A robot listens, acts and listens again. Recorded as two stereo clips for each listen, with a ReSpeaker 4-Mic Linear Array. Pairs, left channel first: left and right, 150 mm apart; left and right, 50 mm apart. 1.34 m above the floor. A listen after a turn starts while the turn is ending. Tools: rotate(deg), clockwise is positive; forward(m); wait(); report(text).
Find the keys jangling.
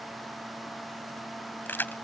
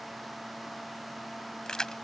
rotate(-30)
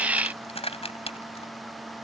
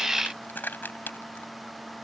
rotate(-140)
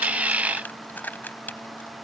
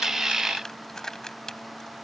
rotate(-10)
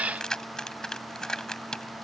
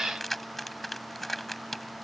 report("Facing the keys jangling.")